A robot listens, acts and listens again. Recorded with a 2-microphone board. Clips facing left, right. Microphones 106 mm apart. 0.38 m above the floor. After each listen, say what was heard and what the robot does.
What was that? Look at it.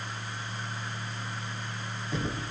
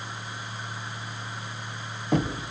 The knocking: about 60° right or 120° right. Turn 60° right.
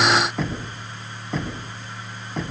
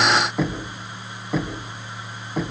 Facing the knocking.